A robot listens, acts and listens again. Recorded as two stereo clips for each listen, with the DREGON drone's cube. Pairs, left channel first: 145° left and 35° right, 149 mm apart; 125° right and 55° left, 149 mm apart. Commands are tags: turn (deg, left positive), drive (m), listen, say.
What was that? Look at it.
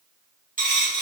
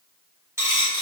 <turn deg="-15"/>
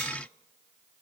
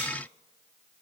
<say>Facing where the dropped coin came from. I can't hear it now.</say>